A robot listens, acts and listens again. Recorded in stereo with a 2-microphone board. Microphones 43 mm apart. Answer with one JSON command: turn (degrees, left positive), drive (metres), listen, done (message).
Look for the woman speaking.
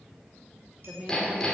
{"turn": -40}
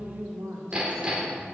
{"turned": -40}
{"turn": -95}
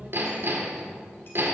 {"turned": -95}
{"listen": true}
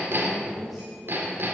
{"listen": true}
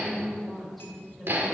{"done": "Found it: a woman speaking, straight ahead."}